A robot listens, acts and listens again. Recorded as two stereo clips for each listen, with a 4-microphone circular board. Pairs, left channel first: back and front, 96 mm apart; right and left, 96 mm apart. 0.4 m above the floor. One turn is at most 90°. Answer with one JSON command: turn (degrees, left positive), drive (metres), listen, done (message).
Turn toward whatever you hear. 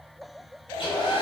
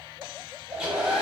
{"turn": 90}
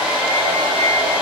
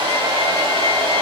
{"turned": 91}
{"turn": 80}
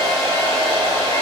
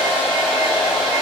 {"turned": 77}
{"done": "Facing the hair dryer."}